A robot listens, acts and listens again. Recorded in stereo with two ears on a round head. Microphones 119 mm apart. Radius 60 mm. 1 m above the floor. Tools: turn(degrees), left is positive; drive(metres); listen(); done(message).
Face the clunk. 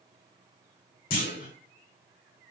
turn(degrees=70)
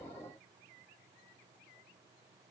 listen()
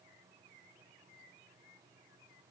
done("I heard a clunk, but can't make it out now. It was about straight ahead or 40° left.")